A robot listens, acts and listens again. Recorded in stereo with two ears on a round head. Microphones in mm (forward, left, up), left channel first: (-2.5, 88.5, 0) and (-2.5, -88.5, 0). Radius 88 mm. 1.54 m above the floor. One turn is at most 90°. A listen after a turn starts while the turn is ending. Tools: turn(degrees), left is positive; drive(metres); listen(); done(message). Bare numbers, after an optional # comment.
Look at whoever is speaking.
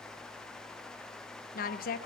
# The woman speaking: about 45° left or 135° left.
turn(45)
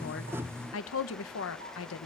# So it is at 85° left.
turn(85)
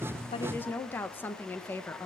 # The woman speaking is now 10° left.
turn(10)
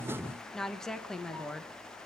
done("Found it: a woman speaking, straight ahead, 1 to 2 m away.")